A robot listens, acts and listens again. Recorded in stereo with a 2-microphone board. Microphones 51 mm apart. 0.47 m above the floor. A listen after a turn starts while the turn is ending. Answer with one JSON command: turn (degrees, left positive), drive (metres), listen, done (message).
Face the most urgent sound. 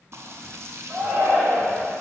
{"turn": -50}
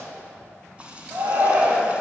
{"turn": -75}
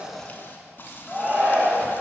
{"done": "Found it: a shout, straight ahead."}